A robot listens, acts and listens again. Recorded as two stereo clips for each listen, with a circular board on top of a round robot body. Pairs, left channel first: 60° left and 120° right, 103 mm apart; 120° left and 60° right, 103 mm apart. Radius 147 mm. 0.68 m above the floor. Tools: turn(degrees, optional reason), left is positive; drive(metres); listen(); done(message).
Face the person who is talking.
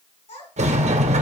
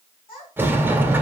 turn(degrees=75, reason="The child speaking: 75° left.")
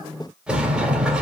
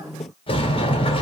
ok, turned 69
listen()
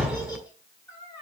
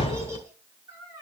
done("Found it: a child speaking, straight ahead, over 4 m away.")